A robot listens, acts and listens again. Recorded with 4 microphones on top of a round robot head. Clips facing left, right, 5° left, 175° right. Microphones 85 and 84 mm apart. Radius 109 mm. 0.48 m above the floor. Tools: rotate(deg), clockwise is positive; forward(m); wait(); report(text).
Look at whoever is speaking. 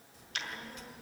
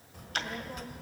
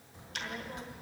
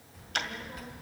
rotate(60)
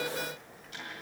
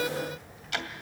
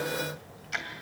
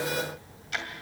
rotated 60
report("Found it: a child speaking, straight ahead, 1 to 2 m away.")